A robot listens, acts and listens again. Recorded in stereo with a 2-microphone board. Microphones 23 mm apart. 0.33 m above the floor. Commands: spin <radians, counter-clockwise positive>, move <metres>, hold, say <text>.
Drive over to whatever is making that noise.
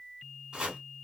spin -0.87
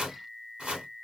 spin -1.31
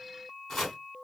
spin 0.17
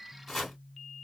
move 1.0
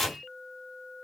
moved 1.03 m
spin 0.17
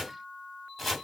move 1.0
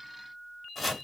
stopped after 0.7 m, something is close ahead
say I am next to the chopping.